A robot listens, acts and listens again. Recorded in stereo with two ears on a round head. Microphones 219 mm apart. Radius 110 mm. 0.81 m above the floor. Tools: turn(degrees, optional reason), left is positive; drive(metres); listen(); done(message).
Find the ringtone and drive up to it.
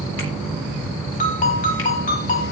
turn(degrees=35, reason="The ringtone: about 35° left or 145° left.")
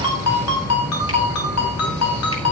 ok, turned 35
turn(degrees=110, reason="So it is at 110° left.")
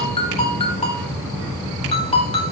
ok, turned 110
turn(degrees=25, reason="The ringtone is now 25° left.")
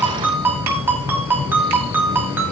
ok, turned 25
turn(degrees=-10, reason="The ringtone is now 10° right.")
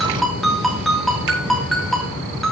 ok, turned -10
drive(metres=1.0)
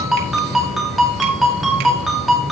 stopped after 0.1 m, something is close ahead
done("Something is in my way. I am facing the ringtone but have not reached it.")